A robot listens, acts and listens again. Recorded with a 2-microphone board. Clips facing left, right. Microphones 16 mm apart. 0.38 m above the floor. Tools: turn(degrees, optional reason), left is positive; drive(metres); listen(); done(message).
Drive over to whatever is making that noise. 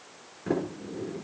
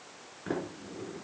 turn(degrees=-15, reason="The sliding door: about 15° right or 165° right.")
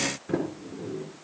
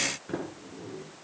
drive(metres=1.0)
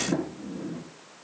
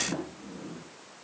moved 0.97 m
drive(metres=1.0)
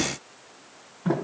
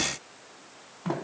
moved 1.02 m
turn(degrees=-10, reason="The sliding door is now 10° right.")
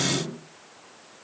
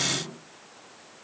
drive(metres=1.0)
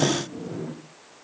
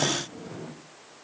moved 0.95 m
drive(metres=1.0)
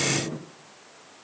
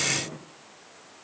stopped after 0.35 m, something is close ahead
done("Arrived at the sliding door, straight ahead.")